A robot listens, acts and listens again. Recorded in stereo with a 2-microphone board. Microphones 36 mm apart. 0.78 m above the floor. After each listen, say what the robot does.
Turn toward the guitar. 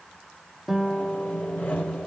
Turn 30° right.
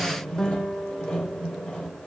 Turn 15° left.
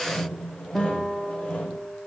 Found it: a guitar, straight ahead.